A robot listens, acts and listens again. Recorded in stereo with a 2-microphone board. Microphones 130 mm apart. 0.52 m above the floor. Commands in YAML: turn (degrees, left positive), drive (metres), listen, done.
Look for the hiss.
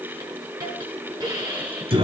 turn: -30
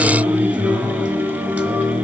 listen: true
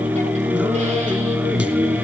listen: true
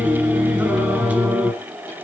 done: "I heard a hiss, but can't make it out now. It was about straight ahead or 120° right."